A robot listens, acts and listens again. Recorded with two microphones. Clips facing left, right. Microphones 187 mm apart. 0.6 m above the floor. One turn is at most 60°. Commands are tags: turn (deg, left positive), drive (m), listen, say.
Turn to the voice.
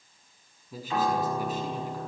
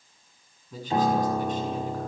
<turn deg="30"/>
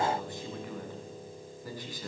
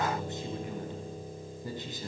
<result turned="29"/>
<turn deg="-25"/>
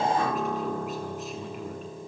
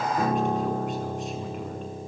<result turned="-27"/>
<listen/>
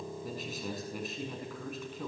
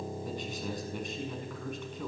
<say>Found it: a man speaking, straight ahead.</say>